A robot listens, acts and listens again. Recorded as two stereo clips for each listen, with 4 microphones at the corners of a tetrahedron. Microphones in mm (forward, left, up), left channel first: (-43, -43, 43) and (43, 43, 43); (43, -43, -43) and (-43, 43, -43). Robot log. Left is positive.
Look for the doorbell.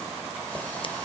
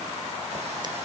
cmd idle
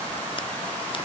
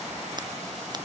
cmd idle
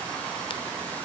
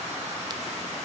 end: I can't make out a doorbell.